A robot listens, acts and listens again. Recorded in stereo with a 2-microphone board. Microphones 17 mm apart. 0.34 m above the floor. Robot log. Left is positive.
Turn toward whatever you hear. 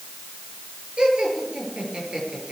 note: The laughter: about 65° right or 115° right.
cmd yaw -65
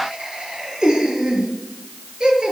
note: So it is at 50° right.
cmd yaw -50
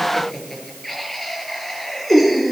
note: The laughter is now 15° left.
cmd yaw +15
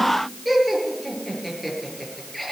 end: Found it: laughter, straight ahead.